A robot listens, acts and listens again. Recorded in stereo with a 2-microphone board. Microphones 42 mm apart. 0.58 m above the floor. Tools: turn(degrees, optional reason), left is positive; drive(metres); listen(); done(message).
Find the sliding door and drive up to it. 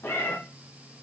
listen()
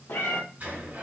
turn(degrees=-45, reason="The sliding door: about 45° right or 135° right.")
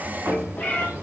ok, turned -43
turn(degrees=-95, reason="So it is at 95° right.")
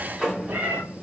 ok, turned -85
turn(degrees=-10, reason="The sliding door is now 10° right.")
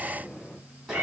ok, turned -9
drive(metres=1.0)
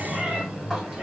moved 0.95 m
drive(metres=1.0)
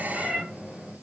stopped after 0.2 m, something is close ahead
turn(degrees=-10, reason="The sliding door is now 10° right.")
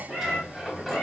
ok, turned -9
done("I am next to the sliding door.")